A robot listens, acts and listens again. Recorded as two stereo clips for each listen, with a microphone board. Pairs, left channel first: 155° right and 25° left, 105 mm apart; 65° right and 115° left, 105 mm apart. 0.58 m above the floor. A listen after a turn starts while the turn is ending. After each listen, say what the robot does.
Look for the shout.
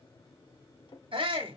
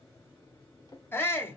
Found it: a shout, straight ahead, 1 to 2 m away.